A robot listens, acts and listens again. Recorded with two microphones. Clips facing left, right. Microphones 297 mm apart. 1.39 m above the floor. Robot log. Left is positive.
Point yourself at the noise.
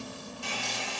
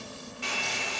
cmd yaw -90
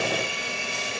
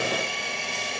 end: Facing the hair dryer.